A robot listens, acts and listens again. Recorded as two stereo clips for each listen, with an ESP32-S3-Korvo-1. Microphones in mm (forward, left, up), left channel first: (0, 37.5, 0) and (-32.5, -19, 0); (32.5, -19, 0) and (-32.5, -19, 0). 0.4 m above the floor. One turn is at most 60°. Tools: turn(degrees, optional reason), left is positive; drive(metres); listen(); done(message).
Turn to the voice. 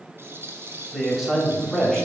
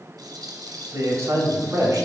turn(degrees=60, reason="The man speaking: 150° left.")
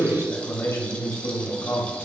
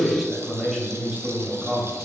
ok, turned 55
turn(degrees=60, reason="The man speaking is now 95° left.")
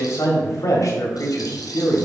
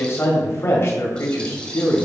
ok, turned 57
turn(degrees=40, reason="The man speaking is now 40° left.")
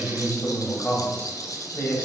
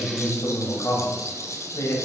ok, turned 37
done("Found it: a man speaking, straight ahead.")